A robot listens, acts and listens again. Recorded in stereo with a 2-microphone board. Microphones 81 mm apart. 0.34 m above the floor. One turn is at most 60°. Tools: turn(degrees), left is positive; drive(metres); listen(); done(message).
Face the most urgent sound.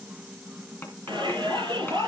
turn(degrees=-60)
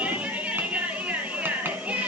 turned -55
turn(degrees=-20)
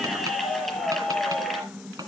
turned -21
done("Facing the shout.")